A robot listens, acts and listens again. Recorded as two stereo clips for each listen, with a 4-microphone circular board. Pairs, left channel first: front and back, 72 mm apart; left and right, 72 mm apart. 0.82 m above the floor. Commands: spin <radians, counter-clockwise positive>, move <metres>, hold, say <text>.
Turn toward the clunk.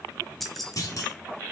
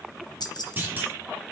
spin -0.52
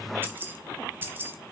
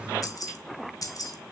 say I heard a clunk from this way, but can't make it out now.